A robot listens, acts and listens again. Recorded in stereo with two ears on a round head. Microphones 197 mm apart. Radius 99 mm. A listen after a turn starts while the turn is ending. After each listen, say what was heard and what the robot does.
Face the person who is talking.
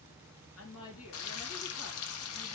Turn 90° left.
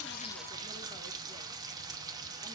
Keep listening.
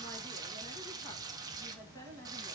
The woman speaking is now 15° left. Turn 15° left.
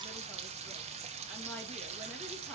Keep listening.
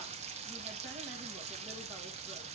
Keep listening.
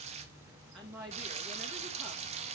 Found it: a woman speaking, straight ahead.